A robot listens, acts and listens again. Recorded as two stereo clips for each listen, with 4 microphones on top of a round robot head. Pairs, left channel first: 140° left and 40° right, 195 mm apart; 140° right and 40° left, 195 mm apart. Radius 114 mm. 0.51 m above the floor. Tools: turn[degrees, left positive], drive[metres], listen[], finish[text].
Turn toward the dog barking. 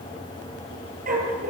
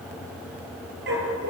Thought: The dog barking: 10° left.
Action: turn[10]
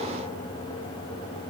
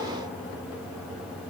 Action: listen[]
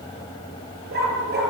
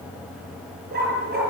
Action: finish[Facing the dog barking.]